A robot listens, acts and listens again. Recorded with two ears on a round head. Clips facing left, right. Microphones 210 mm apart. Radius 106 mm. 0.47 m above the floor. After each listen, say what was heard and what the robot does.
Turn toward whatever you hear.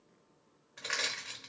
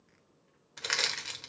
The crushing: about 55° right or 125° right. Turn 55° right.
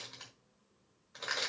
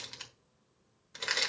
So it is at 45° right. Turn 45° right.
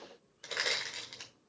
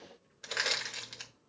The crushing is now 10° right. Turn 10° right.
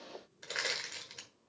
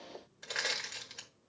Found it: crushing, straight ahead.